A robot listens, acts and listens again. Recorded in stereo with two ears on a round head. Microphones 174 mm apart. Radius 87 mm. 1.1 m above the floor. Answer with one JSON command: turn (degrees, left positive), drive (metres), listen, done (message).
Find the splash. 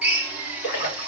{"turn": 55}
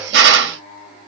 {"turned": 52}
{"listen": true}
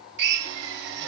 {"done": "I heard a splash, but can't make it out now. It was about 5° left or 70° left."}